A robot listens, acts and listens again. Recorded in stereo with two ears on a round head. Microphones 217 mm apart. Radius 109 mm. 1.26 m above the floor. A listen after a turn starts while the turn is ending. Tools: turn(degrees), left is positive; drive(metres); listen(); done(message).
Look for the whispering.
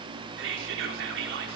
turn(degrees=-50)
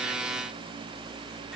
listen()
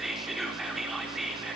done("Facing the whispering, over 4 m away.")